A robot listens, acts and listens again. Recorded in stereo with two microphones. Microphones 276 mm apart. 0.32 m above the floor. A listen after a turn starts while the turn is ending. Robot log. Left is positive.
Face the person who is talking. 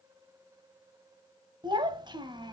note: The child speaking: about 15° right or 165° right.
cmd yaw -15
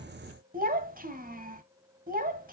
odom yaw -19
note: So it is at 150° right.
cmd yaw -150
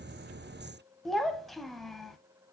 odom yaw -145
end: Found it: a child speaking, straight ahead.